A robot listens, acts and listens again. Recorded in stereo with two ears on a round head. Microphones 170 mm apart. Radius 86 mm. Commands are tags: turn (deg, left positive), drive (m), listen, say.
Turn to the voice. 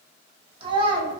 <turn deg="-25"/>
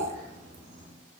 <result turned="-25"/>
<listen/>
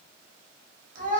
<turn deg="-125"/>
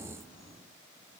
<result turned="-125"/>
<listen/>
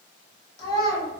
<turn deg="25"/>
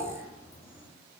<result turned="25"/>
<listen/>
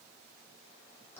<listen/>
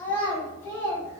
<turn deg="15"/>
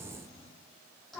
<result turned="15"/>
<say>Facing the child speaking.</say>